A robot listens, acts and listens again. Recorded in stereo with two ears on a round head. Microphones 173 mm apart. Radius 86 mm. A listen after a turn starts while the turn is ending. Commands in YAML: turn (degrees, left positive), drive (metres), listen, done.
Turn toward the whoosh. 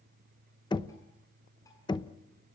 listen: true
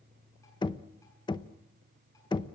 listen: true
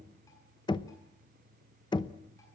done: "I can't make out a whoosh, only knocking."